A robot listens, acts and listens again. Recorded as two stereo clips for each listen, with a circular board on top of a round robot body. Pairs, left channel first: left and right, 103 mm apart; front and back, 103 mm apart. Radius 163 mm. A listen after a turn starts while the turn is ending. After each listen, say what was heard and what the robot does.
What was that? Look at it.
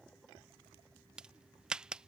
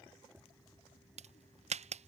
The crack: 170° right. Turn 170° right.
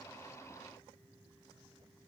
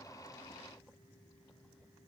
Facing where the crack came from. I can't hear it now.